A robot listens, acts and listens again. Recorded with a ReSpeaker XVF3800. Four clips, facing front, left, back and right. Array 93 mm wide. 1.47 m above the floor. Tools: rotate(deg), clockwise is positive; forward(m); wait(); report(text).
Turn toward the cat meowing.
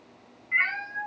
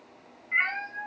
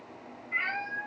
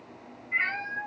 rotate(-45)
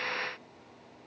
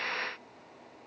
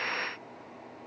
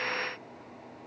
wait()
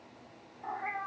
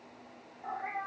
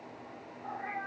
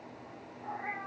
rotate(-10)
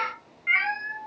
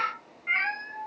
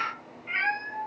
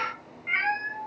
report("Facing the cat meowing.")